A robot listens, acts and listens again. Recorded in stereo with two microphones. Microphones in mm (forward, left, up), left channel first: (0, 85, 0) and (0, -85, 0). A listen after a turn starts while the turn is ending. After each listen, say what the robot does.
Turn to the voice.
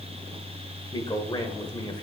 Turn 25° left.
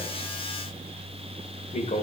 Turn 120° left.
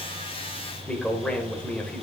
Found it: a man speaking, straight ahead.